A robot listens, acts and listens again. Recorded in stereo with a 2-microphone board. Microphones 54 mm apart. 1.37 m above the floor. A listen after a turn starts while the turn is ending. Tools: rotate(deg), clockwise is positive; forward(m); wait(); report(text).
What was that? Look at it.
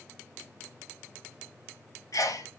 rotate(-90)
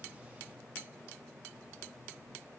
report("Facing where the sneeze came from. I can't hear it now.")